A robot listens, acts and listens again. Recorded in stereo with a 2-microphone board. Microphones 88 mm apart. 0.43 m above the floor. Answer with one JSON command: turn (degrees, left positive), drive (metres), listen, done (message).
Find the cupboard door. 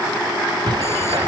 {"turn": -65}
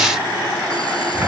{"turn": -30}
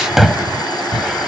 {"done": "Found it: a cupboard door, straight ahead."}